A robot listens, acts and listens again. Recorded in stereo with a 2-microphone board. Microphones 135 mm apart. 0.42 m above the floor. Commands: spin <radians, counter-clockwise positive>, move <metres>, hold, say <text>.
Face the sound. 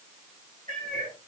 spin -1.13
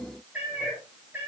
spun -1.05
spin -0.26
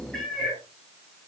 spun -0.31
say Facing the cat meowing.